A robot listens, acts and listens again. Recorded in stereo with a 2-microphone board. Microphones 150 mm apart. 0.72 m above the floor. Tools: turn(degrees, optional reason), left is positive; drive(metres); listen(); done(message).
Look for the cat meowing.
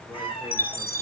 turn(degrees=35, reason="The cat meowing: about 35° left or 145° left.")
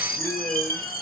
listen()
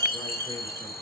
listen()
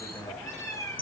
turn(degrees=20, reason="So it is at 20° left.")
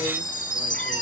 listen()
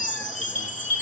listen()
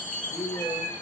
turn(degrees=15, reason="The cat meowing is now 15° left.")
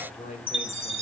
listen()
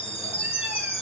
listen()
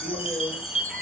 done("Facing where the cat meowing came from. I can't hear it now.")